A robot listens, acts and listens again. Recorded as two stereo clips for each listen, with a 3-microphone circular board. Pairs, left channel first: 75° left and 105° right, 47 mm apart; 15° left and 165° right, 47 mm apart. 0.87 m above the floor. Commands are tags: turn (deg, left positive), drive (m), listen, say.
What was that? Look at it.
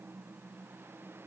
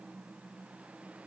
<listen/>
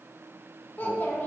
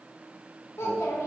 <turn deg="25"/>
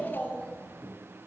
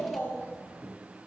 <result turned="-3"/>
<turn deg="25"/>
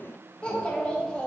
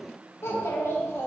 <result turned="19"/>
<say>Found it: a child speaking, straight ahead, under 1 m away.</say>